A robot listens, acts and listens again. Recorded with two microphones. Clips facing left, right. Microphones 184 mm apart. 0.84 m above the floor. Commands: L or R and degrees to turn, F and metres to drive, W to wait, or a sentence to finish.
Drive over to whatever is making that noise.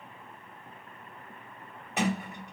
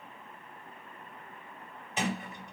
L65
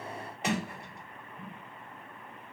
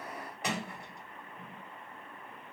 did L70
L25
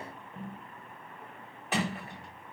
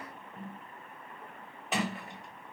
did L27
F1.0
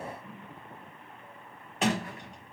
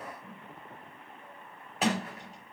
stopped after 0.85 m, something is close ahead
I am next to the sliding door.